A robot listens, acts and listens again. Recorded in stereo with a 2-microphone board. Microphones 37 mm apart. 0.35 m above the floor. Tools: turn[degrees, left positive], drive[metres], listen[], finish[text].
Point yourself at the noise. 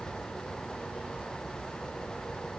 Action: listen[]
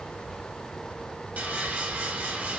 Thought: The sawing: about 50° right or 130° right.
Action: turn[-50]
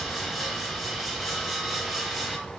Action: finish[Facing the sawing, under 1 m away.]